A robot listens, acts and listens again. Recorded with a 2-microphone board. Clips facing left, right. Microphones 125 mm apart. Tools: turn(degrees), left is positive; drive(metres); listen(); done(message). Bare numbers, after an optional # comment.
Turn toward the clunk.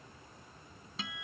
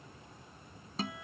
listen()
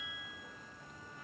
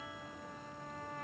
listen()
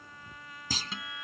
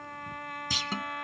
# The clunk: about 40° left or 140° left.
turn(40)
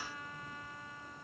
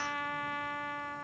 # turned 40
listen()
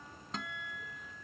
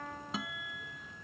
done("I heard a clunk, but can't make it out now. It was about straight ahead or 100° left.")